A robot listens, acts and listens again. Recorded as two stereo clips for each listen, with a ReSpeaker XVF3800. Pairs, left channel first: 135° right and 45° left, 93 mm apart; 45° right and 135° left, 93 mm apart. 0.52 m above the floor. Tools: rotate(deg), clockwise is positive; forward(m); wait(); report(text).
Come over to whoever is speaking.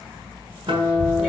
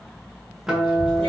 rotate(15)
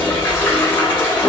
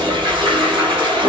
wait()
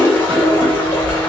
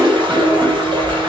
forward(1.0)
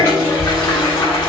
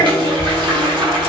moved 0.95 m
forward(1.0)
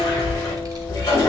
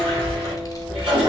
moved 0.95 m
forward(1.0)
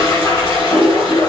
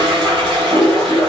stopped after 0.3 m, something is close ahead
wait()
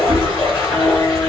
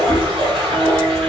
report("Arrived at the child speaking, straight ahead.")